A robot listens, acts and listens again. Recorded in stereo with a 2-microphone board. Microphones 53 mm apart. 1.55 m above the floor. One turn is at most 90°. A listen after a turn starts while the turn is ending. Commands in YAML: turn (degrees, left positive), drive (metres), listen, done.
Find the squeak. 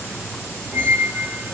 turn: 30
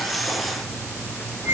turn: 90
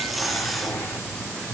turn: 45
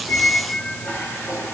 turn: 45
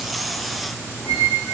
done: "Facing the squeak, 2 to 4 m away."